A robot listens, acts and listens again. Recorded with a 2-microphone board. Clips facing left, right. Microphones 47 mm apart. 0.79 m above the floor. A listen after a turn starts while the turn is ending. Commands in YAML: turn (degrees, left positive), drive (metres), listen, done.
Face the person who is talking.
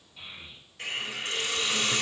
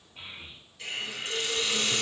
turn: -50
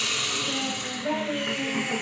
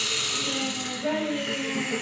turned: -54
turn: -80
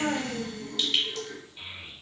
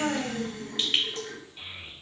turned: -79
done: "Facing the child speaking."